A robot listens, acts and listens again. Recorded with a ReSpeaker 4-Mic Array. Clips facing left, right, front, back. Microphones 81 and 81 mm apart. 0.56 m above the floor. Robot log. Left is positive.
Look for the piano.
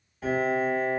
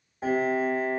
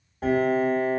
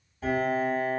note: The piano: 30° right.
cmd yaw -30
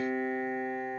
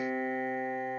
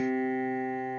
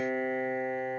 note: The piano is now 15° right.
cmd yaw -15
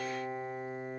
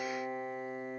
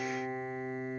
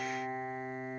end: Facing the piano, under 1 m away.